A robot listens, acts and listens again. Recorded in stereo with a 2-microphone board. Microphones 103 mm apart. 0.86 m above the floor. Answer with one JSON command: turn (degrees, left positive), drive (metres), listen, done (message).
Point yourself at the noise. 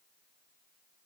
{"listen": true}
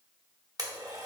{"turn": -40}
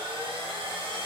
{"turn": -100}
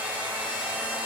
{"turn": -15}
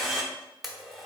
{"done": "Found it: a blender, straight ahead."}